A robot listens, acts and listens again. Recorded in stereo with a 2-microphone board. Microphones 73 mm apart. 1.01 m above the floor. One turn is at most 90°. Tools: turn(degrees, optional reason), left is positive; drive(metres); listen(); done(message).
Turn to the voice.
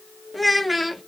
turn(degrees=30)
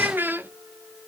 turn(degrees=-30, reason="So it is at 30° right.")
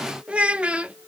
turn(degrees=-15, reason="The child speaking is now 15° right.")
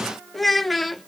done("Found it: a child speaking, straight ahead, under 1 m away.")